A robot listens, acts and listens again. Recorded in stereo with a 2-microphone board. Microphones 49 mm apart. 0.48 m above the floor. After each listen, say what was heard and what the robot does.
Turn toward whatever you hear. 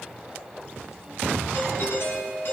The doorbell: about 55° left or 125° left. Turn 55° left.
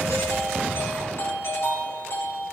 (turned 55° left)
So it is at 70° left. Turn 70° left.
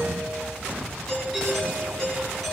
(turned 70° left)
The doorbell is now 10° left. Turn 10° left.
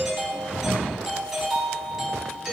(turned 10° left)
Found it: a doorbell, straight ahead, over 4 m away.